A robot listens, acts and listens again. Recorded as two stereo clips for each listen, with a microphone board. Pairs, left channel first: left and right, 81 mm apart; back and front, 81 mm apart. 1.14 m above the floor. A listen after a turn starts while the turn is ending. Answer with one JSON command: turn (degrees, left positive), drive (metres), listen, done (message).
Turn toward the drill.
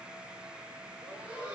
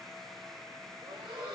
{"listen": true}
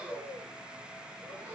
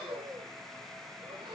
{"listen": true}
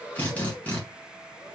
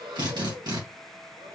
{"turn": 20}
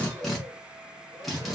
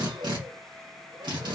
{"done": "Found it: a drill, straight ahead."}